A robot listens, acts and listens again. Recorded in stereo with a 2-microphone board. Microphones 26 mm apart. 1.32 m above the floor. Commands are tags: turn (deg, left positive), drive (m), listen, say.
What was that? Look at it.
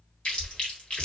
<turn deg="40"/>
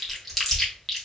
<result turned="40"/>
<say>Facing the chewing, 1 to 2 m away.</say>